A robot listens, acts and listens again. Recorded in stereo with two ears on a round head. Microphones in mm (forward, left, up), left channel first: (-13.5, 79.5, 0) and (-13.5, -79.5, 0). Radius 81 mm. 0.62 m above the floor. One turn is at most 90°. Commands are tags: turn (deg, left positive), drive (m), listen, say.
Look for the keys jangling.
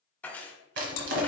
<turn deg="30"/>
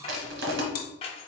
<turn deg="90"/>
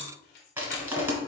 <turn deg="70"/>
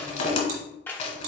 <turn deg="15"/>
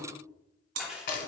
<say>Found it: keys jangling, straight ahead.</say>